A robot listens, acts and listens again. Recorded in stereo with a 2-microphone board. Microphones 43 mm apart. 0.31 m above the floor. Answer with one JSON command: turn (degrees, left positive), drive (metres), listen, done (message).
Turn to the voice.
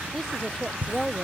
{"turn": 30}
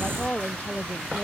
{"turn": 140}
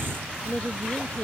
{"turn": 25}
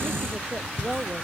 {"turn": -10}
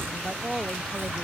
{"done": "Facing the woman speaking."}